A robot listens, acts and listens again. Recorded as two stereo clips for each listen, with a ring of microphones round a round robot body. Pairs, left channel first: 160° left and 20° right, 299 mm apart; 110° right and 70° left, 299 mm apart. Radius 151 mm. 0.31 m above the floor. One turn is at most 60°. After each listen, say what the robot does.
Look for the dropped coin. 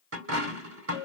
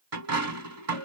Turn 25° left.
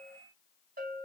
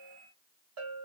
I heard a dropped coin from this way, but can't make it out now.